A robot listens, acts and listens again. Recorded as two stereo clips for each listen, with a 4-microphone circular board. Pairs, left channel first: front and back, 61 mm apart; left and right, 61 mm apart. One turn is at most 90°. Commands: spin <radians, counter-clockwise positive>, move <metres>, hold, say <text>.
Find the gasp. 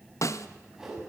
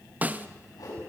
hold
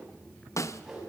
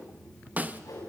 hold
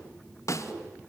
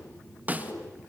say I can't make out a gasp, only a whoosh and a snare drum.